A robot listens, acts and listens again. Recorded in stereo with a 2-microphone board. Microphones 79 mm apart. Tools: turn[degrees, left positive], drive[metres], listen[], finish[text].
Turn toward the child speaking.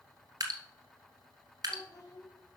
Thought: The child speaking: about 50° left or 130° left.
Action: turn[50]
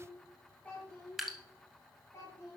Thought: So it is at 35° left.
Action: turn[35]
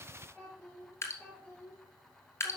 Thought: The child speaking is now 10° left.
Action: turn[10]
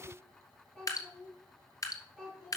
Action: finish[Found it: a child speaking, straight ahead.]